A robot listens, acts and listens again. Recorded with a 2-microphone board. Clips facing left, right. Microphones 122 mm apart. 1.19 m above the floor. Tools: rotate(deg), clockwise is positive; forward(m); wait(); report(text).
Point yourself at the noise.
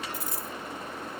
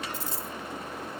rotate(30)
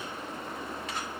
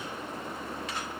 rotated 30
wait()
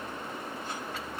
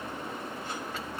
report("I heard a dropped coin, but can't make it out now. It was about straight ahead or 120° right.")